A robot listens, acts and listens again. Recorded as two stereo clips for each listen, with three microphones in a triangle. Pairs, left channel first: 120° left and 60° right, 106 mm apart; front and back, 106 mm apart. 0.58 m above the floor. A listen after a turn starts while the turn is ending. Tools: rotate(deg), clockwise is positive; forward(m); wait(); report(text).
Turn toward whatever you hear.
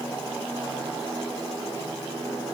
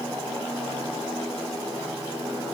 wait()
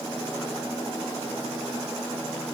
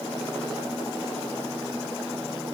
wait()
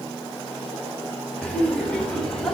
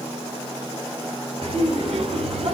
rotate(160)
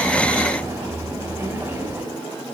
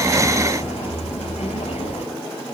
report("Facing the laughter, 2 to 4 m away.")